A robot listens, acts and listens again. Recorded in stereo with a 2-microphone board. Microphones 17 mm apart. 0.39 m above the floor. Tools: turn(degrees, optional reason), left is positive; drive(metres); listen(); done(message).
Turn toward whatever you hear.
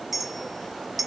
turn(degrees=-30)
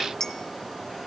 turn(degrees=15, reason="So it is at 15° left.")
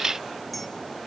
listen()
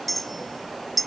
done("Found it: a clink, straight ahead, under 1 m away.")